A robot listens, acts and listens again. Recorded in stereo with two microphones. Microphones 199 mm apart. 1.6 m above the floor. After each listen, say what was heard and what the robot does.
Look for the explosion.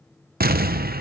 The explosion: about 50° right or 130° right. Turn 50° right.
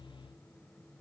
Keep listening.
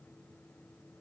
I heard an explosion, but can't make it out now. It was about straight ahead or 80° right.